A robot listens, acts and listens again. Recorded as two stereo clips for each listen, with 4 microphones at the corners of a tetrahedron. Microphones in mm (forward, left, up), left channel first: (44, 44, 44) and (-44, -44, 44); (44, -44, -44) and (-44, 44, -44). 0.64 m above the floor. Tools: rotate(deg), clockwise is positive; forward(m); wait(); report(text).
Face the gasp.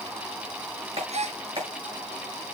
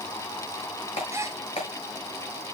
rotate(160)
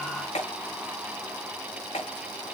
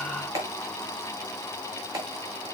report("Facing where the gasp came from. I can't hear it now.")